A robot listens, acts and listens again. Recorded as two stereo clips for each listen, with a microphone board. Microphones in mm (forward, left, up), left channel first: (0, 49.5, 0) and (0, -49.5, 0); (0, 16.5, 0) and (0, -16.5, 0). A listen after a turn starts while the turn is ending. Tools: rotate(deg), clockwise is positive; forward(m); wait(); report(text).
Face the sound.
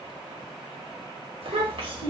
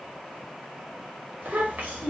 rotate(70)
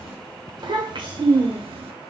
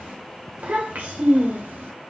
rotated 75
rotate(70)
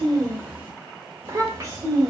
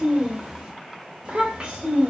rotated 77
rotate(35)
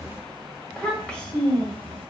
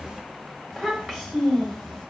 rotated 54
rotate(-15)
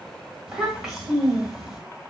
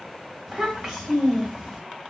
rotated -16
report("Facing the child speaking, 1 to 2 m away.")